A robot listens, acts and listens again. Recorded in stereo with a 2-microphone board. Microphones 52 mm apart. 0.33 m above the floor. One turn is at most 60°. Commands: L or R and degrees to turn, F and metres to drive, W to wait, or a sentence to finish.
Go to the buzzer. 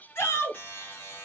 L45
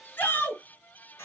L60
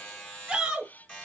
L20
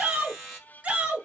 F1.0
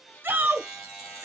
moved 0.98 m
F1.0
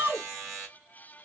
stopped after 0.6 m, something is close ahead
R10
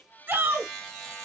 I am next to the buzzer.